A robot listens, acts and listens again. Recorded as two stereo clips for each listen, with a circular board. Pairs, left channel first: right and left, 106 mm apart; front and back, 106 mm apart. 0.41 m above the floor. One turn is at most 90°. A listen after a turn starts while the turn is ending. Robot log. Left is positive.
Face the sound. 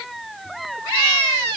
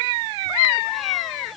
cmd idle
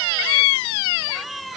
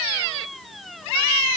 cmd idle
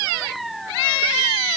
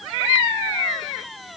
end: I can't make out anything.